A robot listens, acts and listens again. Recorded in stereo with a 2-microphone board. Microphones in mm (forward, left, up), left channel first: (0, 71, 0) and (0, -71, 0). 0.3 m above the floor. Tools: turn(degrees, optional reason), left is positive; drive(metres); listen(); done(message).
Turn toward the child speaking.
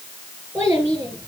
turn(degrees=-15, reason="The child speaking: about 15° right or 165° right.")
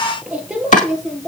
turn(degrees=30)
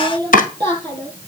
turn(degrees=-30, reason="So it is at 30° right.")
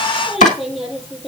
done("Found it: a child speaking, straight ahead.")